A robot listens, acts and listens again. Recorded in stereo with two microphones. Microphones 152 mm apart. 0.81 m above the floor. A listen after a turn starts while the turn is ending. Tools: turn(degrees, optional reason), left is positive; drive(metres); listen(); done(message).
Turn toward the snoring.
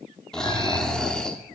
turn(degrees=30)
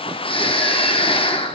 turn(degrees=145, reason="So it is at 145° left.")
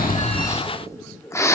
turn(degrees=20, reason="The snoring is now 20° left.")
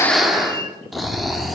done("Found it: snoring, straight ahead, under 1 m away.")